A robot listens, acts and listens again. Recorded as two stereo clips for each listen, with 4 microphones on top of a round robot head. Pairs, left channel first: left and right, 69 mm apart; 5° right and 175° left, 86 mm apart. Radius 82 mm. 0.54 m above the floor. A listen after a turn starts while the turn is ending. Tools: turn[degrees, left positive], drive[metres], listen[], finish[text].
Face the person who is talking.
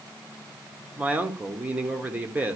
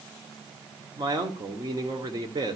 Thought: The man speaking: 155° right.
Action: turn[-155]
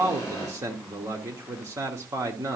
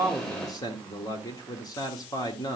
Thought: The man speaking is now 45° right.
Action: turn[-45]
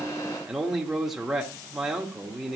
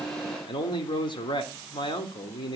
Action: finish[Found it: a man speaking, straight ahead, 1 to 2 m away.]